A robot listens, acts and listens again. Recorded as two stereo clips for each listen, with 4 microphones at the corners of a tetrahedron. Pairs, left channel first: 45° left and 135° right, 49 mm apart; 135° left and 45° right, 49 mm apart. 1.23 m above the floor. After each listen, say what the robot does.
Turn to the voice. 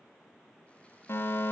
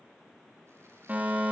Keep listening.
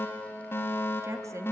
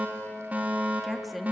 Turn 135° right.
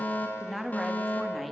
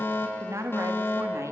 Turn 45° right.
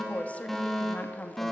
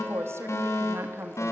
Turn 15° right.
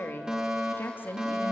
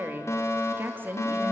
Found it: a woman speaking, straight ahead.